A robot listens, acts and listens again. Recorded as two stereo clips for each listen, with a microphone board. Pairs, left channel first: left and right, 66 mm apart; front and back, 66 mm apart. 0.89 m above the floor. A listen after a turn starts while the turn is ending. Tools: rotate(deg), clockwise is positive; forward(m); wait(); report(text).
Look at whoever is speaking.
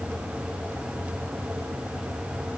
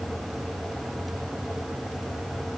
wait()
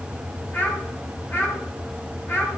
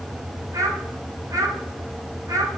rotate(-145)
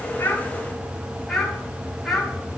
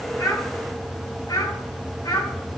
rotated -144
report("Found it: a child speaking, straight ahead, over 4 m away.")